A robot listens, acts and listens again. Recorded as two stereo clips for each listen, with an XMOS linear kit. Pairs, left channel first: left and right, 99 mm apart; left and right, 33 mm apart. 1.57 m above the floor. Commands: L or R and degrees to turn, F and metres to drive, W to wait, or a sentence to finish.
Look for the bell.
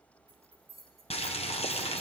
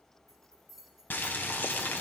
L30
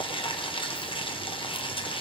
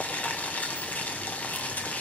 W
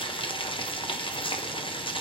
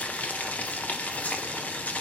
W
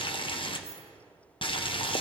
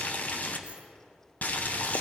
I heard a bell, but can't make it out now. It was about 30° right or 150° left.